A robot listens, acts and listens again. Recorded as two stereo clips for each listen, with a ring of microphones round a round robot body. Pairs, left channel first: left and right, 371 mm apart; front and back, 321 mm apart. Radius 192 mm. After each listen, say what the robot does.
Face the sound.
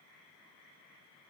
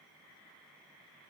Keep listening.
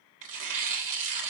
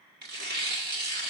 Turn 120° right.
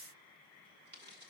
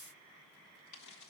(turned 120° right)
Keep listening.
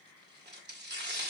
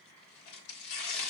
Turn 30° right.
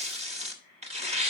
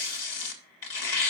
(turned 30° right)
Turn 20° right.
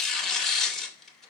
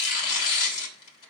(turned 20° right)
Found it: tearing paper, straight ahead, 1 to 2 m away.